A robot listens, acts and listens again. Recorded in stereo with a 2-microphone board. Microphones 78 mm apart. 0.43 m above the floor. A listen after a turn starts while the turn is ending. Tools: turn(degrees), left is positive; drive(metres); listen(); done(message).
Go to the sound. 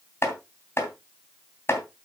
turn(degrees=35)
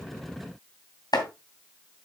turn(degrees=110)
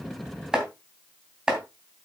turn(degrees=-10)
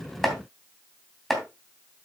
drive(metres=1.0)
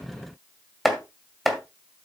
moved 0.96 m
drive(metres=1.0)
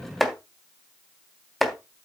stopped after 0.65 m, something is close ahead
done("Arrived at the chopping, straight ahead.")